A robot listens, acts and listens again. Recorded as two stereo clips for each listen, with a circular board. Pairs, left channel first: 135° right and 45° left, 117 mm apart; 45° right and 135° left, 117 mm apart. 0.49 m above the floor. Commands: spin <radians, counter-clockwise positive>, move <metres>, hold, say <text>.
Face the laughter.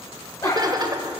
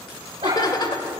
say Facing the laughter.